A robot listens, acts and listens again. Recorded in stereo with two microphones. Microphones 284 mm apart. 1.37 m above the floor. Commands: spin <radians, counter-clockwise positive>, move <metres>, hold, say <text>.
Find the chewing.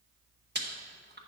spin -0.70
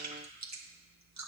spin -1.75
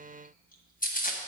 spin 0.52
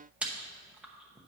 say Found it: chewing, straight ahead.